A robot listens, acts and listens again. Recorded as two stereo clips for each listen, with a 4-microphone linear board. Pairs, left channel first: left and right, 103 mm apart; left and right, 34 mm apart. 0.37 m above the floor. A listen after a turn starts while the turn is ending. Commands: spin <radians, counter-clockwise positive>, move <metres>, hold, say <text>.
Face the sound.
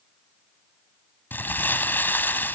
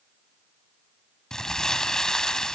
spin 0.35
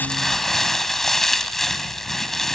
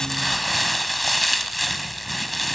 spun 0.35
say Facing the crumpling.